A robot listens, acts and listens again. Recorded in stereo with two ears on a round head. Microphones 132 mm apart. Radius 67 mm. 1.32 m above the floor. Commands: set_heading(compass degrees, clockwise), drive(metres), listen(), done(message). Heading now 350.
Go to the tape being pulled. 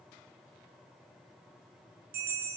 listen()
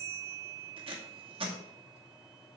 set_heading(30)
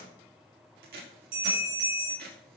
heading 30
set_heading(130)
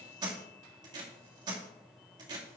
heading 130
set_heading(160)
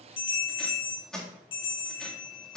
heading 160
drive(1.0)
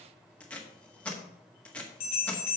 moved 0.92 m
set_heading(150)
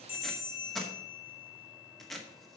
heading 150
drive(1.0)
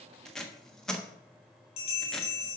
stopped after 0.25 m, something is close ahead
done("Arrived at the tape being pulled, straight ahead.")